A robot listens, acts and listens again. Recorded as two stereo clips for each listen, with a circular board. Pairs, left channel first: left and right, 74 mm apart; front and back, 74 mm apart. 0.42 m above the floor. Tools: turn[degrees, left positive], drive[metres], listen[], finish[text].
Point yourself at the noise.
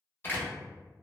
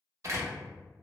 Thought: The door slam: 145° left.
Action: turn[145]
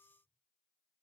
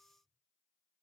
Action: finish[Facing where the door slam came from. I can't hear it now.]